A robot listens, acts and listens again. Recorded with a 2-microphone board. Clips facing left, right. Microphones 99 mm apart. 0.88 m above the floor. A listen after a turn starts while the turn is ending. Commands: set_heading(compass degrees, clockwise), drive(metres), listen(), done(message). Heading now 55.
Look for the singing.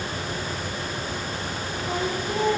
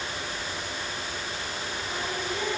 set_heading(10)
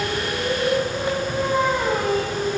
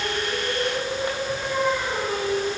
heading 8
set_heading(283)
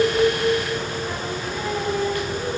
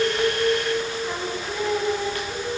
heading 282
done("Facing the singing, over 4 m away.")